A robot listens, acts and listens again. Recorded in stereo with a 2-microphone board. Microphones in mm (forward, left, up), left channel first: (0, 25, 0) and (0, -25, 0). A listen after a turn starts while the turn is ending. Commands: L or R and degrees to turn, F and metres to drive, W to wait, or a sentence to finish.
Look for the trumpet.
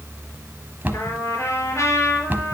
L70
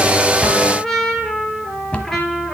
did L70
Found it: a trumpet, straight ahead.